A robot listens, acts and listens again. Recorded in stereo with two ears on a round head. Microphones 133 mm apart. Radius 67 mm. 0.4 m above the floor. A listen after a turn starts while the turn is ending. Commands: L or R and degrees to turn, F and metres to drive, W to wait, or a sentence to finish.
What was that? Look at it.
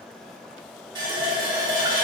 R30
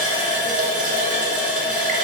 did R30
R120
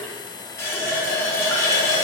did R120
L20
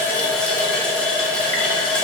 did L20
Facing the running tap, 1 to 2 m away.